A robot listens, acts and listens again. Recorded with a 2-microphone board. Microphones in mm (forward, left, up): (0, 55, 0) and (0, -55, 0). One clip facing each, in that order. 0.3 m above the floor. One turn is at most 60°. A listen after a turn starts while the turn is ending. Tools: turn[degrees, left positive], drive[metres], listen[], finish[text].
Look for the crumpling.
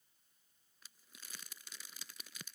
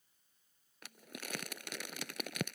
Action: turn[-60]
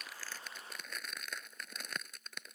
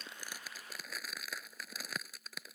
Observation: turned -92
Action: finish[Found it: crumpling, straight ahead.]